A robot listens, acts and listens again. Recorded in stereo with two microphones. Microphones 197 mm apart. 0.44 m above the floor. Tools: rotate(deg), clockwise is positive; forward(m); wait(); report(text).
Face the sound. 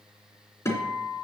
rotate(-30)
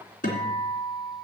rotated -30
rotate(-135)
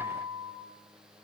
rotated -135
rotate(25)
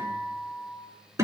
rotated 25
rotate(15)
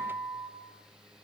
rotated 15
report("Facing the guitar.")